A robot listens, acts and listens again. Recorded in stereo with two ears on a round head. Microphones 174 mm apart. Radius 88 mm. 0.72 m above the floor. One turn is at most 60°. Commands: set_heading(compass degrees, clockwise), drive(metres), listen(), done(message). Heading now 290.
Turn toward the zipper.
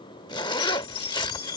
set_heading(265)
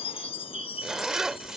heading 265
done("Facing the zipper.")